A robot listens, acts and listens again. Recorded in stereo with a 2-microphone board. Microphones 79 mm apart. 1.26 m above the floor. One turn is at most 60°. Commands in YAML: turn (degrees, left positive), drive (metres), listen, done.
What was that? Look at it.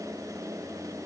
listen: true
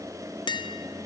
turn: 60
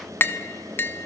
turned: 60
turn: 30
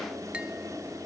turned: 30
listen: true
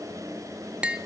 turn: -15
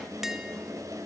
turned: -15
listen: true
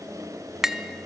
done: "Facing the tapping."